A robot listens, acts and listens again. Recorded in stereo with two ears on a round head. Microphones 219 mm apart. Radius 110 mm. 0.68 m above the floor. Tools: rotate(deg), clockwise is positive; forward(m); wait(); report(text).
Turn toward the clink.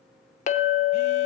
rotate(-30)
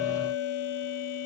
rotate(-120)
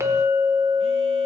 rotate(10)
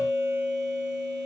report("Found it: a clink, straight ahead.")